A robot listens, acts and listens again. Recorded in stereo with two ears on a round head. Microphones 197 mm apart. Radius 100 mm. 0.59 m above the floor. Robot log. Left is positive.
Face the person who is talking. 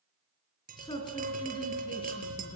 note: The man speaking: about 20° left or 160° left.
cmd yaw +20
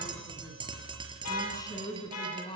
note: The man speaking: about 20° left or 160° left.
cmd yaw +20
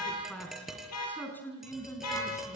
cmd yaw +30
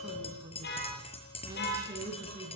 note: So it is at 15° right.
cmd yaw -15
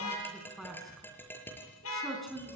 end: Facing the man speaking, over 4 m away.